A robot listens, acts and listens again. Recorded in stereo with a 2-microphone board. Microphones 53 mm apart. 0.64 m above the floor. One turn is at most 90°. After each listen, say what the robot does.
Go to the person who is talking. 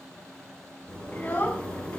Turn 35° left.
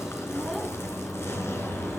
Keep listening.
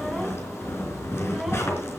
Keep listening.
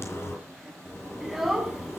Drive 1.0 m forward.
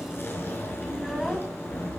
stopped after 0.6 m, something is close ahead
Keep listening.
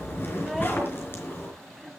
Keep listening.
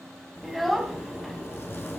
Something is in my way. I am facing the child speaking but have not reached it.